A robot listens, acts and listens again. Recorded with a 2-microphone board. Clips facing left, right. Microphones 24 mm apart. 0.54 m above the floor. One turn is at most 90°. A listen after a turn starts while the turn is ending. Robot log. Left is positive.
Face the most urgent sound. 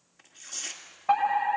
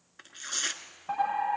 note: The fire alarm: about 40° left or 140° left.
cmd yaw +40
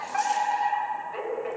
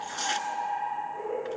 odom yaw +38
note: So it is at 100° left.
cmd yaw +90
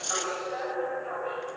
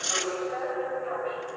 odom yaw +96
end: Found it: a fire alarm, straight ahead, over 4 m away.